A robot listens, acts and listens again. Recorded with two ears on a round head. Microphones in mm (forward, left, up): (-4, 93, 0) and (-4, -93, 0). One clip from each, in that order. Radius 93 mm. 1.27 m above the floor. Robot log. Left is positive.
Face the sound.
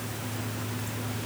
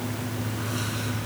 cmd idle
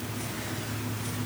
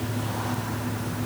cmd idle
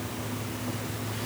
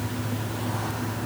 end: I can't make out anything.